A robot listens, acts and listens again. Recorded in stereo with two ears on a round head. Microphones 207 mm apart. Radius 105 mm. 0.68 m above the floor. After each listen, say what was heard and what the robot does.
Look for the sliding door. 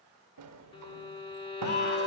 Turn 90° right.
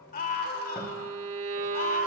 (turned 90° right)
Keep listening.
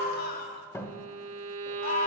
The sliding door is now 10° left. Turn 10° left.
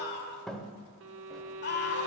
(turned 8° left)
Facing the sliding door.